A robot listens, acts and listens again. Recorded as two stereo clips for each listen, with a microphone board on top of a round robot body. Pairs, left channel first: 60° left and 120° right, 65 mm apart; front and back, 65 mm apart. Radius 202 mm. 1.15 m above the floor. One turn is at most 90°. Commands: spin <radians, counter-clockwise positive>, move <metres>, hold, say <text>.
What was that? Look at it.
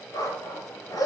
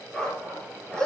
spin 1.40
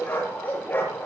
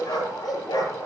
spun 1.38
say Found it: a dog barking, straight ahead.